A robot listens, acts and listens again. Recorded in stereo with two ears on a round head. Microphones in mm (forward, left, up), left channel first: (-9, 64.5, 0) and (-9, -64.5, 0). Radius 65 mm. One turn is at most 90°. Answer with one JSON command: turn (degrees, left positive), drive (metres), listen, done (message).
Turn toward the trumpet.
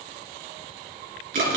{"listen": true}
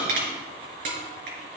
{"listen": true}
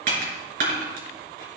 {"done": "I can't make out a trumpet, only crushing."}